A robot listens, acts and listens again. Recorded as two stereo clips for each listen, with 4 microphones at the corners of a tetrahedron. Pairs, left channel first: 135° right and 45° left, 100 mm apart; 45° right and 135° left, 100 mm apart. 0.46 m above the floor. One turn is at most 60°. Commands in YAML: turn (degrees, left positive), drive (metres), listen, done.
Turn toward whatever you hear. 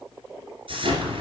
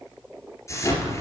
turn: 15
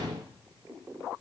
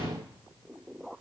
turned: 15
done: "I heard an explosion from this way, but can't make it out now."